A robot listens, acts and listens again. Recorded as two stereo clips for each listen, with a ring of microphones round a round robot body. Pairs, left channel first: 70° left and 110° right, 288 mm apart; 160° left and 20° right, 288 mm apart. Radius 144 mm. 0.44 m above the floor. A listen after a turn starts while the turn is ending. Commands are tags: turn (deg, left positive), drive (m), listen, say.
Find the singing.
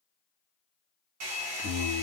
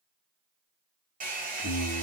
<turn deg="-160"/>
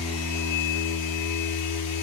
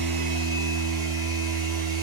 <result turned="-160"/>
<turn deg="20"/>
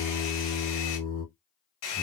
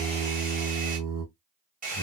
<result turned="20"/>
<turn deg="25"/>
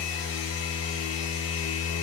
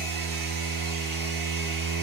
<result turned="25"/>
<turn deg="20"/>
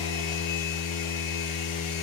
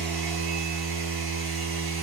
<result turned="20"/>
<turn deg="10"/>
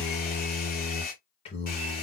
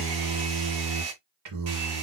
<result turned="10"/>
<say>Facing the singing, 1 to 2 m away.</say>